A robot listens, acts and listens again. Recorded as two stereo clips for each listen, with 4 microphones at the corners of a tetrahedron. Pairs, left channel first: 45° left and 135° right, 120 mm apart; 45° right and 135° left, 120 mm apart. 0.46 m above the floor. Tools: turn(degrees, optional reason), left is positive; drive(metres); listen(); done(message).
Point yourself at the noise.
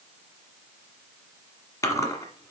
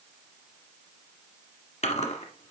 turn(degrees=-20, reason="The chewing: 20° right.")
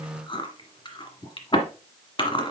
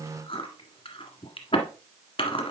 done("Facing the chewing.")